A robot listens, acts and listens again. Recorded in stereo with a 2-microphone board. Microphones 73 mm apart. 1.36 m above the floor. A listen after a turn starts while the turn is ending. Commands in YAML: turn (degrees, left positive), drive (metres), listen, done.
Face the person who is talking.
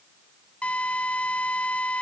listen: true
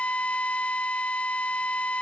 listen: true
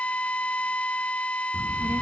turn: -35
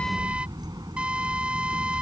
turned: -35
turn: -110
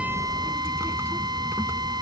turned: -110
turn: -35
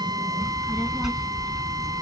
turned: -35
done: "Found it: a child speaking, straight ahead."